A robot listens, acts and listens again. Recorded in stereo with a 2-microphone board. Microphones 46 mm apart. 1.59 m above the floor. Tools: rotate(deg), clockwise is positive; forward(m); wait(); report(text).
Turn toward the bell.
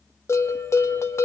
rotate(-65)
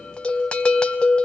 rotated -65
rotate(-20)
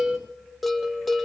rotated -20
report("Facing the bell, 1 to 2 m away.")